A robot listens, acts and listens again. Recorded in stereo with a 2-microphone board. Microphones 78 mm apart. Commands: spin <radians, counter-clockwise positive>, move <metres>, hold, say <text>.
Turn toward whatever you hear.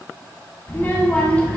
spin 0.26
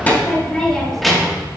spin -0.52
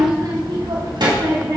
spin -1.75
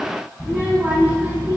spin -0.35
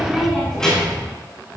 spin 0.17
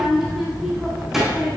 say Found it: a child speaking, straight ahead, 2 to 4 m away.